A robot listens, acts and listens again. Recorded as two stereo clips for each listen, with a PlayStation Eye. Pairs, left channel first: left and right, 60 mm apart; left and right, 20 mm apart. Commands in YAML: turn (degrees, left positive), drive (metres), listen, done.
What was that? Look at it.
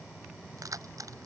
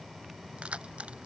turn: -70
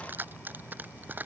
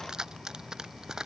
turn: -30
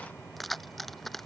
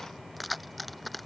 done: "Found it: keys jangling, straight ahead."